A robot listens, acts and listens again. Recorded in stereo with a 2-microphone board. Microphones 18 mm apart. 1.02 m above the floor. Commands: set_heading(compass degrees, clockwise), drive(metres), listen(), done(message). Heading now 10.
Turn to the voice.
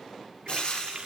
listen()
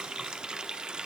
listen()
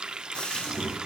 set_heading(350)
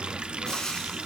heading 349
set_heading(309)
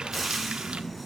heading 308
set_heading(198)
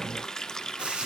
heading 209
set_heading(199)
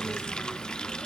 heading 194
done("Found it: a child speaking, straight ahead.")